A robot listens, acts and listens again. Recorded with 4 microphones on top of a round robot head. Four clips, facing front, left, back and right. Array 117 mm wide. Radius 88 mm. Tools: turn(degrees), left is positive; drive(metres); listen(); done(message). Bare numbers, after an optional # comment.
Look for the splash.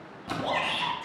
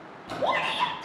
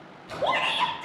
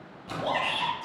done("Facing the splash.")